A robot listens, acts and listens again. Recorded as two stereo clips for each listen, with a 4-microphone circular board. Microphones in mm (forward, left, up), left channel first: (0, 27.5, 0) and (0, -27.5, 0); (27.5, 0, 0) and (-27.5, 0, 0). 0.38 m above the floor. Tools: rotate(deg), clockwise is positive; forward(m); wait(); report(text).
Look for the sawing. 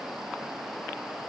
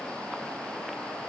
wait()
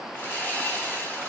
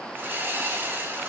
rotate(-140)
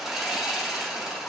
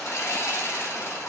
report("Facing the sawing.")